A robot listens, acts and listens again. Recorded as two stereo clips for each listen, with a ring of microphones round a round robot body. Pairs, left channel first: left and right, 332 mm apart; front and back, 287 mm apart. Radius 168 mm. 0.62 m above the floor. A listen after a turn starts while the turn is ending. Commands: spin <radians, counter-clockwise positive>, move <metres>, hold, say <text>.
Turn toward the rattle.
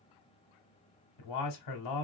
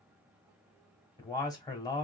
hold
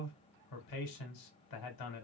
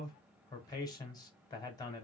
hold
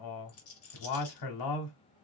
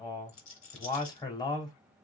spin 0.79
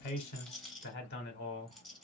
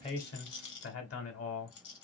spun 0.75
say Facing the rattle, 1 to 2 m away.